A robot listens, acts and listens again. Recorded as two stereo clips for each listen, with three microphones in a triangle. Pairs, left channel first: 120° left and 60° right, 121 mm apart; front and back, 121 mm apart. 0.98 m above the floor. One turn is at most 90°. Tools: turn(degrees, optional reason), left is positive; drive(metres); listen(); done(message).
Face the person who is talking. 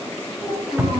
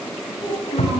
turn(degrees=60, reason="The child speaking: 60° left.")
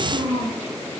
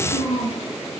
done("Facing the child speaking.")